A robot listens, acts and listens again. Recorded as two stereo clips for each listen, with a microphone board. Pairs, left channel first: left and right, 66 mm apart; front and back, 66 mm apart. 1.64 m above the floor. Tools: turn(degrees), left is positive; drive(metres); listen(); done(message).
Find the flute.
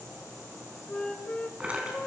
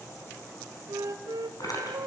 turn(degrees=165)
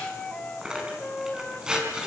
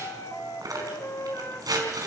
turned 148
turn(degrees=15)
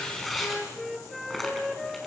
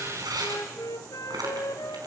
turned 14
done("Found it: a flute, straight ahead, 1 to 2 m away.")